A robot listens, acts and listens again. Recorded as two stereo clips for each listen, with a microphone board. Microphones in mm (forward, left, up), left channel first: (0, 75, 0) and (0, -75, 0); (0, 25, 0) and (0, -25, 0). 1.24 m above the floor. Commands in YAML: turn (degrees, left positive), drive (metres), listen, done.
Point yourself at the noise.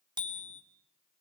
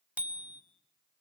turn: -30
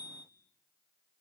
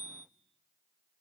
turn: -115
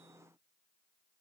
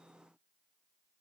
listen: true
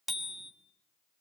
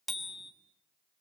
done: "Facing the bicycle bell, 2 to 4 m away."